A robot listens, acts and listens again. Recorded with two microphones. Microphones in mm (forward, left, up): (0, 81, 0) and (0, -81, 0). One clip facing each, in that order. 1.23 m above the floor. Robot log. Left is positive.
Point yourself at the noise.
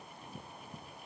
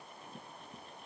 cmd idle
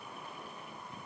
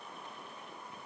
cmd idle
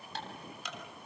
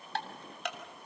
note: The ticking: about 60° right or 120° right.
cmd yaw -60
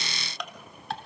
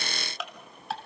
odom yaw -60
end: Facing the ticking.